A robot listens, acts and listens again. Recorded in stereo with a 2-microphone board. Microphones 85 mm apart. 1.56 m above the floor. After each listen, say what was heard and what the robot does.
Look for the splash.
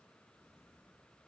Keep listening.
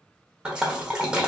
Turn 30° right.
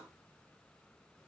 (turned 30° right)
Keep listening.
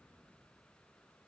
I heard a splash, but can't make it out now. It was about 20° left or 140° right.